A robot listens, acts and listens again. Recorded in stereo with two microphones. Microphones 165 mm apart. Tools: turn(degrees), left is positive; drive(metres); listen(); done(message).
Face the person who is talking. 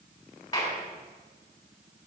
listen()
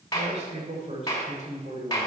turn(degrees=-45)
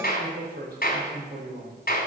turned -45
turn(degrees=-105)
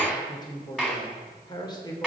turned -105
turn(degrees=25)
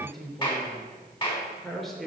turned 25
done("Found it: a man speaking, straight ahead, 2 to 4 m away.")